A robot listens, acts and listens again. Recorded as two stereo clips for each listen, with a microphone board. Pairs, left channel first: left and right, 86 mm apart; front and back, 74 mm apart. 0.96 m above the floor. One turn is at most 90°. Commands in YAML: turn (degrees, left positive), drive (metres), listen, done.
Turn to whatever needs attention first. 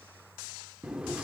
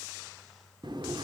listen: true
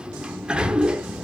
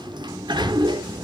listen: true
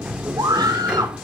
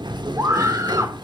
turn: -90
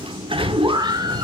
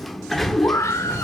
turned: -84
turn: -50
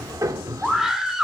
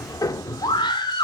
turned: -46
done: "Found it: a scream, straight ahead."